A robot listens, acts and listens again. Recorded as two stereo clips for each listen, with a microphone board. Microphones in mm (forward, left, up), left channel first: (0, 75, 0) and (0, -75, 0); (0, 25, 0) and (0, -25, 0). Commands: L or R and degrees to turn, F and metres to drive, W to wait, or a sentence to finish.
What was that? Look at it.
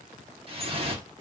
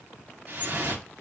R40
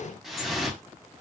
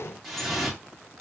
Facing the dripping, 1 to 2 m away.